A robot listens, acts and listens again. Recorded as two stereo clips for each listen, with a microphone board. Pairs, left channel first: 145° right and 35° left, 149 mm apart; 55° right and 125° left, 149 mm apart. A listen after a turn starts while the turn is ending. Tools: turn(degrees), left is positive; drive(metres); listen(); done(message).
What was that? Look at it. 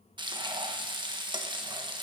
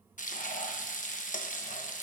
turn(degrees=-25)
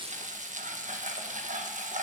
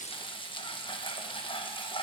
done("Found it: frying, straight ahead.")